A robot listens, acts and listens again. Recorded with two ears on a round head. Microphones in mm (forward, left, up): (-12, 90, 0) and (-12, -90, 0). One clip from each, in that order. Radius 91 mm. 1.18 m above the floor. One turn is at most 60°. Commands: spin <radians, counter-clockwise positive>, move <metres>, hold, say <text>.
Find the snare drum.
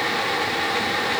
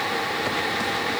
hold
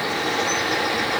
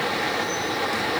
hold
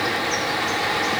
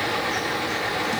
say I can't make out a snare drum to turn to.